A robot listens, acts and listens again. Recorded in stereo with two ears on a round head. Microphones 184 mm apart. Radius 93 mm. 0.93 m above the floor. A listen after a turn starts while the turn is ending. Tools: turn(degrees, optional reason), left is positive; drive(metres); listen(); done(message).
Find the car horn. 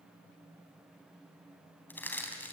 listen()
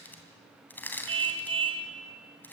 turn(degrees=-25, reason="The car horn: about 25° right or 155° right.")
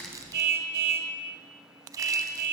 turn(degrees=-125, reason="So it is at 125° right.")
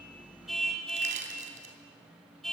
done("Facing the car horn, 2 to 4 m away.")